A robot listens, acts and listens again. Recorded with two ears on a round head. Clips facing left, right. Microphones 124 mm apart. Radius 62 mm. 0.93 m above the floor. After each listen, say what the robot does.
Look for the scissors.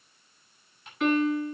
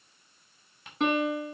Keep listening.
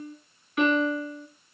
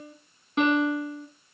Keep listening.
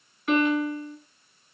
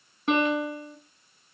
I can't make out scissors to turn to.